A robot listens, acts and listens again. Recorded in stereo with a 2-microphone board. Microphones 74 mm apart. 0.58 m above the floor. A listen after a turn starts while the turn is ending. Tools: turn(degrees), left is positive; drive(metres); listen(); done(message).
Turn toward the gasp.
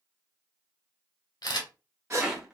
turn(degrees=-40)
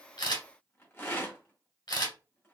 listen()
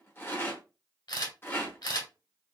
done("I heard a gasp, but can't make it out now. It was about straight ahead or 100° right.")